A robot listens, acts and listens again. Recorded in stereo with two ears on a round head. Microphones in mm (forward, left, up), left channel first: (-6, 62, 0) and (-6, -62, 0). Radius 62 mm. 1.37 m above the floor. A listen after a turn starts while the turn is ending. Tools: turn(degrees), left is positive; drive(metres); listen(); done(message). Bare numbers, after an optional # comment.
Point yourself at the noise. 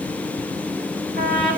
# The trumpet: about 70° right or 110° right.
turn(-70)
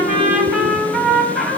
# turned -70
done("Found it: a trumpet, straight ahead, over 4 m away.")